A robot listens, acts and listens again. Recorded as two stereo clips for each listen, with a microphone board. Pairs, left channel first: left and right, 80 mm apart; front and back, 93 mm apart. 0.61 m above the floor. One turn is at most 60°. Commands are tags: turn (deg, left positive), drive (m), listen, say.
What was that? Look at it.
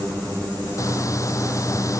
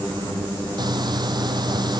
<turn deg="60"/>
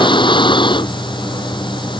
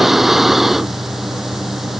<turn deg="60"/>
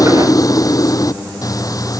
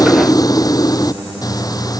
<turn deg="50"/>
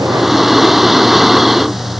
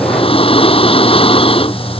<say>Facing the breathing.</say>